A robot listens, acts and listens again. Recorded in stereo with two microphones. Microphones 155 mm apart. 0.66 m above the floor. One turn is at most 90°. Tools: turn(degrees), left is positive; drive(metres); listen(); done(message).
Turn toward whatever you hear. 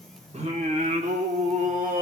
turn(degrees=-65)
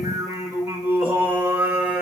turn(degrees=-10)
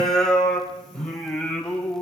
turn(degrees=10)
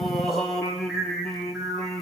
done("Found it: singing, straight ahead.")